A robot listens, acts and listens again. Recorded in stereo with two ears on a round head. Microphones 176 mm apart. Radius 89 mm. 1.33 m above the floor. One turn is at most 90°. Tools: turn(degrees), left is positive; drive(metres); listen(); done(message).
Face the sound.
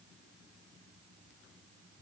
listen()
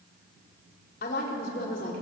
turn(degrees=45)
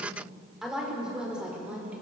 done("Facing the woman speaking, over 4 m away.")